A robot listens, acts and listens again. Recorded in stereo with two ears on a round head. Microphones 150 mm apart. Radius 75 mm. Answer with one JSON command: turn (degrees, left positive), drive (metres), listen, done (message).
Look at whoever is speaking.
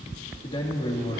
{"turn": 30}
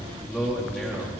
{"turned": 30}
{"done": "Found it: a man speaking, straight ahead, 2 to 4 m away."}